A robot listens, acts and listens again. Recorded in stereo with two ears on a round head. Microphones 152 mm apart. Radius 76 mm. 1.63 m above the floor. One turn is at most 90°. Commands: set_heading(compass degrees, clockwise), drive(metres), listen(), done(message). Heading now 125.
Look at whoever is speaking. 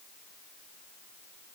listen()
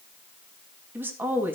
set_heading(155)
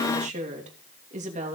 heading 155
set_heading(245)
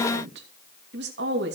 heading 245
set_heading(315)
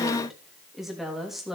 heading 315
done("Found it: a woman speaking, straight ahead.")